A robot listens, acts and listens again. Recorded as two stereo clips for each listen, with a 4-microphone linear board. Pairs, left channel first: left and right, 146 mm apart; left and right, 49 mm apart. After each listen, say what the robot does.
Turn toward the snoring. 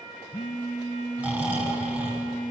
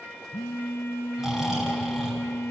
Turn 30° right.
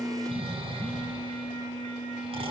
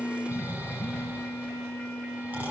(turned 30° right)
Turn 135° right.
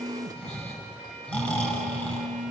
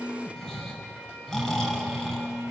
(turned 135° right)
Turn 10° left.
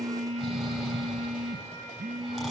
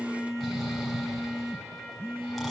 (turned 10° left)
Found it: snoring, straight ahead.